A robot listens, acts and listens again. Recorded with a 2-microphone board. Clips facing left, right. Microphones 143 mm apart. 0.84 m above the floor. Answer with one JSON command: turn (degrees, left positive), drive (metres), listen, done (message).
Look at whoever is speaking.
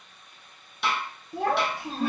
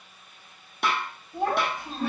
{"turn": 70}
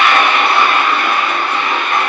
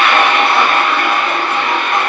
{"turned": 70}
{"listen": true}
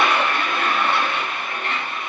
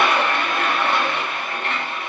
{"listen": true}
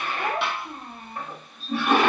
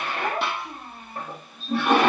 {"done": "Facing the child speaking."}